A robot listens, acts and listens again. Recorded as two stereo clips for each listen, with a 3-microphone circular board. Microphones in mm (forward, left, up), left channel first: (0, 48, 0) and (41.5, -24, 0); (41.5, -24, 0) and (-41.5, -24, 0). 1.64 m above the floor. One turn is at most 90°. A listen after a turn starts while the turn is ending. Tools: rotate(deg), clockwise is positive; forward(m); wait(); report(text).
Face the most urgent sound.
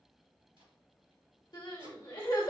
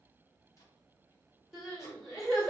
rotate(-90)
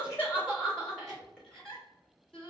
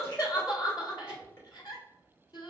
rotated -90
rotate(-35)
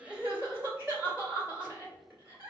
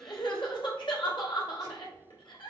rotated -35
report("Facing the crying.")